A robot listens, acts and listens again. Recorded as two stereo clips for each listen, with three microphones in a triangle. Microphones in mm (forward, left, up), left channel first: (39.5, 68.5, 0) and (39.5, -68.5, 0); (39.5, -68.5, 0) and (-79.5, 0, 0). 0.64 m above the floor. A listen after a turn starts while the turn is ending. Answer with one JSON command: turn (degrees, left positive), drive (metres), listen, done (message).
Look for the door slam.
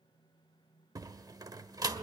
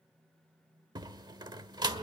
{"turn": -150}
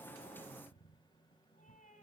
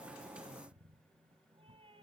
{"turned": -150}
{"done": "I heard a door slam from this way, but can't make it out now."}